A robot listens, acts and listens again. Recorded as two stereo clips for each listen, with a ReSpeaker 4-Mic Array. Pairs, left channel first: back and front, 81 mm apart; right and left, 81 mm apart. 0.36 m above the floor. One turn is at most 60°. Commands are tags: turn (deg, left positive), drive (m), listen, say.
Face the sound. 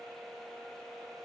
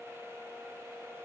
<listen/>
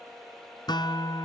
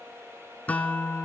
<turn deg="-60"/>
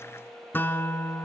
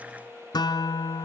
<turn deg="-60"/>
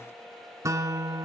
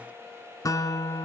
<turn deg="-45"/>
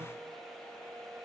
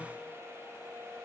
<listen/>
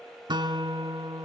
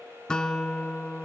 <turn deg="-10"/>
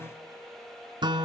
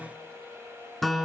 <say>Facing the guitar.</say>